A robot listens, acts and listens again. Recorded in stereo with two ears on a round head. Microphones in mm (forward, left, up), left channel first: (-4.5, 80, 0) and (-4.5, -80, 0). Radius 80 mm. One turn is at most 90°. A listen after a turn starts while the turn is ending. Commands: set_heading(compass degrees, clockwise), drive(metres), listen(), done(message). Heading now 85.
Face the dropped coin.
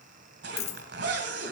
set_heading(50)
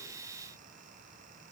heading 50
listen()
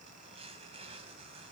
done("I heard a dropped coin, but can't make it out now. It was about straight ahead or 110° left.")